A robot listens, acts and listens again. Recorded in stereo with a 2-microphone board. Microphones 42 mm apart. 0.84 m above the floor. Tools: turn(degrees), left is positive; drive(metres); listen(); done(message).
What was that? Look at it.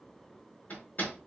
turn(degrees=45)
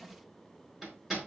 done("Facing the hammering, over 4 m away.")